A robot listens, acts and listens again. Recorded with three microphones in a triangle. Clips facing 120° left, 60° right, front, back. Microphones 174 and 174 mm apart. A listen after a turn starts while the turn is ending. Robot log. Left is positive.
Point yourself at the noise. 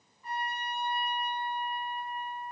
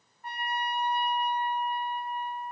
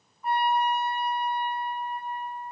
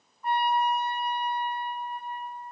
note: The trumpet: 85° right.
cmd yaw -85
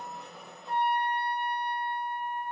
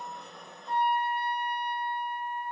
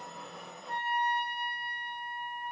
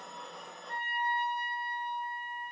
end: Facing the trumpet.